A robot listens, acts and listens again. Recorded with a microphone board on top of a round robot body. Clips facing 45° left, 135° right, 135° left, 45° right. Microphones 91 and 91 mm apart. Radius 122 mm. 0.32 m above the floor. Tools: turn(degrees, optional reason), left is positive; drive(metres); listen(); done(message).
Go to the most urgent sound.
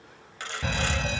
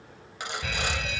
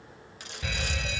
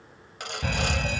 drive(metres=1.0)
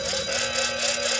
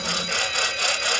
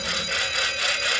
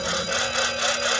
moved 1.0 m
drive(metres=1.0)
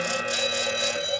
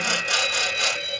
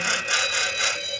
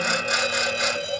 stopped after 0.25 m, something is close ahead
turn(degrees=-10, reason="The alarm is now 10° right.")
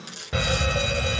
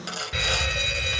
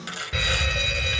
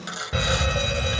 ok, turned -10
done("Blocked. The alarm is further on, straight ahead.")